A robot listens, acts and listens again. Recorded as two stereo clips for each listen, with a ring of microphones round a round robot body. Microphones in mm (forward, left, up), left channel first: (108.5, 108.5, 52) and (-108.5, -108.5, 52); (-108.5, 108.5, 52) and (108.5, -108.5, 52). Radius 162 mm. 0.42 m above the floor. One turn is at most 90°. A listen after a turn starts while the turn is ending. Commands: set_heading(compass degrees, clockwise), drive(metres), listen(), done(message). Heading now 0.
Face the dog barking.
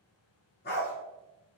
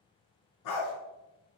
set_heading(270)
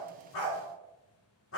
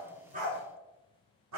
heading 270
done("Facing the dog barking, 1 to 2 m away.")